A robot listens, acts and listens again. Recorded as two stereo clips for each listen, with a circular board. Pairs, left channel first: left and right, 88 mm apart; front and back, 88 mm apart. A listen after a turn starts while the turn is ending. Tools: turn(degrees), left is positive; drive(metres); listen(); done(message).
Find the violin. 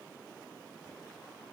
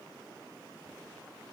listen()
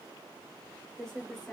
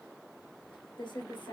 listen()
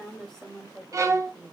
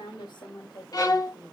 turn(degrees=-45)
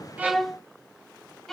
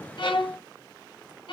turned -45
done("Found it: a violin, straight ahead, 1 to 2 m away.")